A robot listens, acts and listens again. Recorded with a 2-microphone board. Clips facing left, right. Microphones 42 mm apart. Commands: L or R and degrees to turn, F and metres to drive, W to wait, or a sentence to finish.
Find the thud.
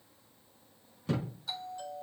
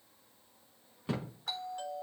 R20
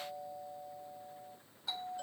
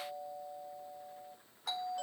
W
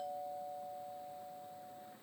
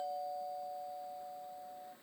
I heard a thud, but can't make it out now. It was about straight ahead or 140° right.